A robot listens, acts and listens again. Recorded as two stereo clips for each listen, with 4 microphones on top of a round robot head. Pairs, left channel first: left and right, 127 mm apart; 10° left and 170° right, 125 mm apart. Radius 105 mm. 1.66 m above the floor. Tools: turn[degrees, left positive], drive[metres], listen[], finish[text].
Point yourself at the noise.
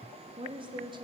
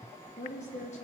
Thought: The woman speaking: 40° right.
Action: turn[-40]
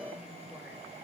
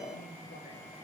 Action: listen[]
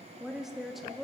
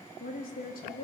Action: finish[Facing the woman speaking.]